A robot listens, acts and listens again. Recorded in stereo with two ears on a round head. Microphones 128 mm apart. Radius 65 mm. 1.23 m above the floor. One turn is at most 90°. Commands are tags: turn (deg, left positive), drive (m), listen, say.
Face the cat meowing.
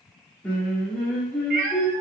<turn deg="-60"/>
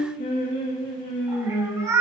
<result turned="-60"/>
<turn deg="-20"/>
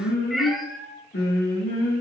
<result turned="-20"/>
<say>Facing the cat meowing.</say>